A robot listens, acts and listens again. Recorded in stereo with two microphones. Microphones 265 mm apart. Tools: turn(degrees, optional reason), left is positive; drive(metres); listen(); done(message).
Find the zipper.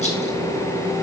listen()
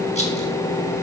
listen()
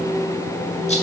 done("I can't make out a zipper to turn to.")